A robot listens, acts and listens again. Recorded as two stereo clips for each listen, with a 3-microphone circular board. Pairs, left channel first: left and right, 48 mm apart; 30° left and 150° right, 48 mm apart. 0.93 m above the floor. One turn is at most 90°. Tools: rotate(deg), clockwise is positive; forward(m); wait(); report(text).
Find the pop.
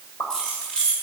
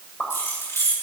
rotate(-90)
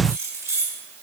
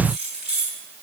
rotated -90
report("Facing where the pop came from. I can't hear it now.")